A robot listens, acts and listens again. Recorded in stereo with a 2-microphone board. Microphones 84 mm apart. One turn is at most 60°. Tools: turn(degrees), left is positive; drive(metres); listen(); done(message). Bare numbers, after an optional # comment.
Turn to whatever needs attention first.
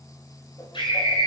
turn(60)
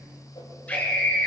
# So it is at 15° left.
turn(15)
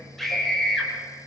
done("Found it: a scream, straight ahead, over 4 m away.")